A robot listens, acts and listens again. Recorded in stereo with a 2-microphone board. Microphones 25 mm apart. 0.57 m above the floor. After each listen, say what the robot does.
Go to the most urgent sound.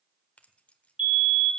Turn 50° right.
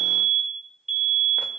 Turn 20° right.
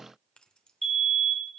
Drive 1.0 m forward.
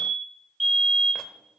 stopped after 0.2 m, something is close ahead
Something is in my way. I am facing the fire alarm but have not reached it.